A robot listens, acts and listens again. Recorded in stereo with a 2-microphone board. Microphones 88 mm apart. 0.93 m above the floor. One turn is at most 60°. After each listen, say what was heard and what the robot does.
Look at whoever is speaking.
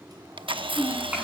The child speaking: about 20° right or 160° right. Turn 20° right.
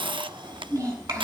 So it is at 140° right. Turn 60° right.
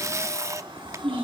The child speaking is now 100° right. Turn 60° right.
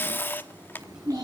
The child speaking is now 40° right. Turn 40° right.
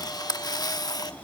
Keep listening.
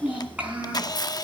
The child speaking is now 15° right. Turn 15° right.
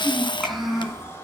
Found it: a child speaking, straight ahead, over 4 m away.